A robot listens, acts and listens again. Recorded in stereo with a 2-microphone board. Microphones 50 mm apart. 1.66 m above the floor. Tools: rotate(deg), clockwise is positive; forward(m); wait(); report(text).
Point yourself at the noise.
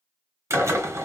rotate(90)
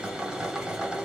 rotate(10)
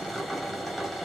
report("Found it: a drill, straight ahead.")